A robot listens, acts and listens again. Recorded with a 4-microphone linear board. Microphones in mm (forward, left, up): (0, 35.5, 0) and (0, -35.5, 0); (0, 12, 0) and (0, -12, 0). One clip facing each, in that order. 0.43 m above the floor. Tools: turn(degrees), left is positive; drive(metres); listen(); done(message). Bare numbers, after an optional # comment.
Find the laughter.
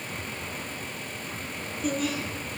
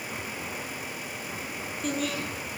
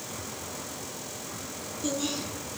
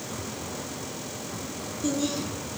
turn(30)
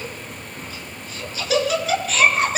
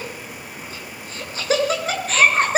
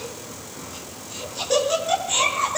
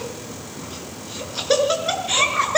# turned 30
# So it is at 40° right.
turn(-40)
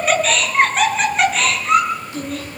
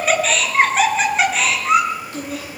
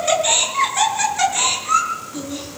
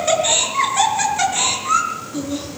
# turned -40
done("Found it: laughter, straight ahead, over 4 m away.")